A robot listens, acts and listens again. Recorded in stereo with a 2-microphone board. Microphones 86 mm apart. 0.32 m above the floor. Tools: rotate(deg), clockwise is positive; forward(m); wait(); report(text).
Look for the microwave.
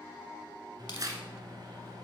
rotate(55)
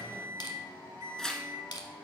rotate(45)
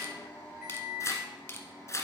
rotate(15)
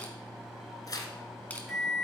report("Facing the microwave.")